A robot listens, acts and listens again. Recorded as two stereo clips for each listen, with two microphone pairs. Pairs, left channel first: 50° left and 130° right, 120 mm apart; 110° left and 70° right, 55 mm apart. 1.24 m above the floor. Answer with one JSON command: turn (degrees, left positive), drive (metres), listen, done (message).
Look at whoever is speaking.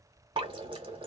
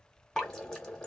{"listen": true}
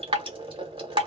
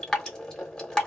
{"listen": true}
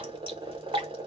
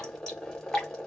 {"done": "I can't make out anyone speaking to turn to."}